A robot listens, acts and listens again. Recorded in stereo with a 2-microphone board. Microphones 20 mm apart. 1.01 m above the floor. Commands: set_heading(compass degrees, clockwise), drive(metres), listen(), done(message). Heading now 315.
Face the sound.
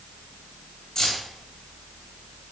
set_heading(280)
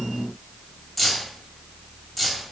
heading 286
done("Facing the keys jangling, 1 to 2 m away.")